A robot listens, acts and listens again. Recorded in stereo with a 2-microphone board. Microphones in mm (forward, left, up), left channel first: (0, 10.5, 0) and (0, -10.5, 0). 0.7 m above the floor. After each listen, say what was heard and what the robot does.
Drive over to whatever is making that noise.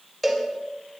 Turn 30° left.
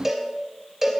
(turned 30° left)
So it is at 20° right. Turn 20° right.
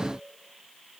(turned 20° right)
Drive 1.0 m forward.
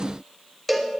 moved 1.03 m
The cowbell is now 10° left. Turn 10° left.
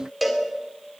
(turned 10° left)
Drive 1.0 m forward.
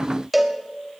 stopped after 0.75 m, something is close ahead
Arrived at the cowbell, straight ahead.